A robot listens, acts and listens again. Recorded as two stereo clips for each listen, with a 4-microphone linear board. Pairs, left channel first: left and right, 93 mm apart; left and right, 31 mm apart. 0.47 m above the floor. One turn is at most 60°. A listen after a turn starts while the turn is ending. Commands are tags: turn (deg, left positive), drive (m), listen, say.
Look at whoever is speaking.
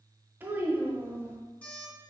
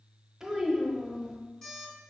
<turn deg="-20"/>
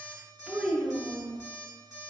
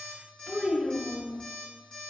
<say>Facing the child speaking.</say>